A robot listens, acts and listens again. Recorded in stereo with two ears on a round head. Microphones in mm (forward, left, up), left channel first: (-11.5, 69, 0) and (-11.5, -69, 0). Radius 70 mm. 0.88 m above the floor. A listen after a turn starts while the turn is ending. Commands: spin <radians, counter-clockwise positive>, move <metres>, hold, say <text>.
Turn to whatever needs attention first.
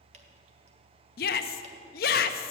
spin 1.13
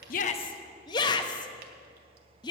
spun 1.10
spin 0.52
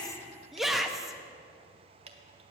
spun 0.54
say Facing the shout.